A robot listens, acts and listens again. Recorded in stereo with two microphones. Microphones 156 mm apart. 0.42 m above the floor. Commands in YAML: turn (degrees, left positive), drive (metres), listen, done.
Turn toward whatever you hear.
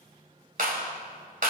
turn: -65
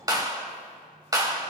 turn: -25
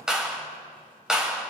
done: "Found it: a clap, straight ahead, 1 to 2 m away."